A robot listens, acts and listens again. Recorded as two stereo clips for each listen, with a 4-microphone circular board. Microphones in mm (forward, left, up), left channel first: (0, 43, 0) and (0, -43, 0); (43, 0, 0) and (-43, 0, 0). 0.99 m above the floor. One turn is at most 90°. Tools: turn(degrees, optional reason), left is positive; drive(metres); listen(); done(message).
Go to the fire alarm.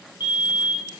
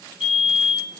turn(degrees=90, reason="The fire alarm: 95° left.")
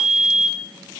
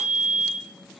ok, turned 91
drive(metres=1.0)
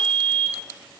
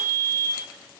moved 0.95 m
drive(metres=1.0)
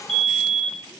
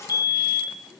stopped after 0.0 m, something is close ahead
done("I am next to the fire alarm.")